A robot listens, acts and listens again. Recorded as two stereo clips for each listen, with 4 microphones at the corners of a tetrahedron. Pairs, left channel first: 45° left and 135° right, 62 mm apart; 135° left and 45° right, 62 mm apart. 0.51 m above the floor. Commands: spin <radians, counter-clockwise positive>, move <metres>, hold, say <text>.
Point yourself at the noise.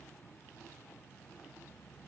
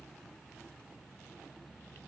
hold
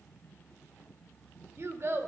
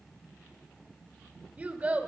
spin -1.83
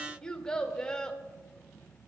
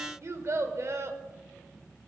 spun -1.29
spin -0.52
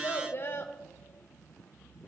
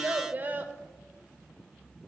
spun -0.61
say Facing the child speaking.